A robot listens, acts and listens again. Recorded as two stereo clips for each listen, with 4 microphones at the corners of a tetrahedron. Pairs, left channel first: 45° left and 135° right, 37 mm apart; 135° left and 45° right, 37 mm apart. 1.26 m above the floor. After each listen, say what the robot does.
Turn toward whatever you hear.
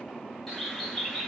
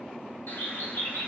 Turn 130° left.
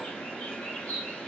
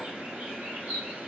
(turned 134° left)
Facing the bird, under 1 m away.